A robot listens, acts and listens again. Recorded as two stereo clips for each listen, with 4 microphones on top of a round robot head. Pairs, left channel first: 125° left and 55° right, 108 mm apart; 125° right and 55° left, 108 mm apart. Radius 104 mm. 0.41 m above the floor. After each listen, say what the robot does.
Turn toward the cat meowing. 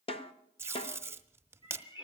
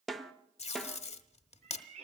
Turn 75° left.
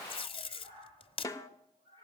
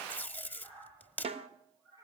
Facing the cat meowing, over 4 m away.